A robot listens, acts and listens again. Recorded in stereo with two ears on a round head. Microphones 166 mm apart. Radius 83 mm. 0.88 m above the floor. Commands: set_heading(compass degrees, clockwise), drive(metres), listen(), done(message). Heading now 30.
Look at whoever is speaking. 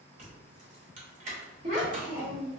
set_heading(75)
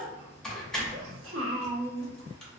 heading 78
set_heading(168)
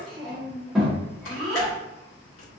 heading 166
done("Found it: a child speaking, straight ahead, 1 to 2 m away.")